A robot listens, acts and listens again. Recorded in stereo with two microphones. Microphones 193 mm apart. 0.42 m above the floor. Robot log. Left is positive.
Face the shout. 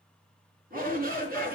note: The shout: about 50° right or 130° right.
cmd yaw -50
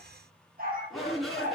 end: Found it: a shout, straight ahead.